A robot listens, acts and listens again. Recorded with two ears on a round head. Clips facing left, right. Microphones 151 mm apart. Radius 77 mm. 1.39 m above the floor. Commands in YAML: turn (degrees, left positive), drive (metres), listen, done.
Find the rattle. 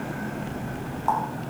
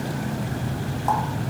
listen: true
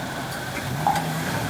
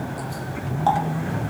listen: true
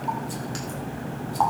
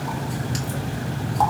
done: "I can't make out a rattle to turn to."